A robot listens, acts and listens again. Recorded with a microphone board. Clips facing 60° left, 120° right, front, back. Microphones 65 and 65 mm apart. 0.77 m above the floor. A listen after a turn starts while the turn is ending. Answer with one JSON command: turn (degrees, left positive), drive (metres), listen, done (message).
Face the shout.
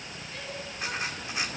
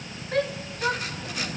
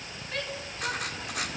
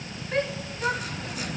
{"turn": -120}
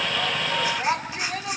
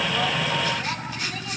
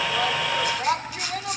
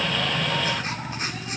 {"turn": 15}
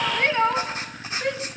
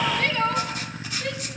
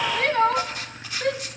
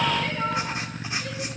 {"done": "Facing the shout, 2 to 4 m away."}